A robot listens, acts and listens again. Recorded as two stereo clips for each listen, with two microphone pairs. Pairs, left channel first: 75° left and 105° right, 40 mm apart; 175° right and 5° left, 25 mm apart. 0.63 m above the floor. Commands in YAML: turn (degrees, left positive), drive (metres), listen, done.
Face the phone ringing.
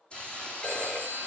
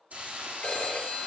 turn: 135
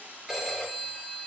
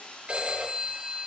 turn: -30
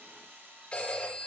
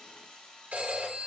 turn: 10
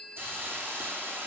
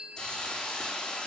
done: "Facing the phone ringing."